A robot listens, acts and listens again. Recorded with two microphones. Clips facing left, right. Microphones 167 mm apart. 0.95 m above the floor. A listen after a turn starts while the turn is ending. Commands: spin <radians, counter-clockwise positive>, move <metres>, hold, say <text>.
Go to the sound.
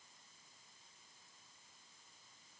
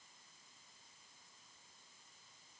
hold
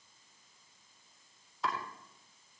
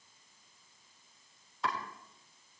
spin 0.52
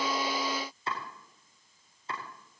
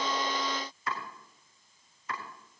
spin 2.62
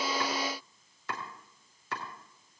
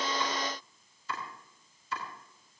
spin 1.48
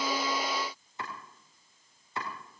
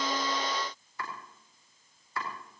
spin 0.44
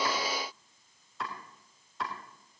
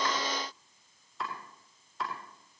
move 1.0
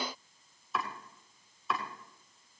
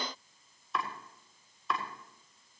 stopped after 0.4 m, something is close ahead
say Blocked. The chopping is further on, straight ahead.